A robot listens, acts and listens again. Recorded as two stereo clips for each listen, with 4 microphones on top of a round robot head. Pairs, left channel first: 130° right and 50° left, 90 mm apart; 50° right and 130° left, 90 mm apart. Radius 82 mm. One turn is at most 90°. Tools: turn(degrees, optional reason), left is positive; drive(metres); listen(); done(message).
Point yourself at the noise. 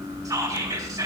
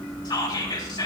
done("Facing the whispering.")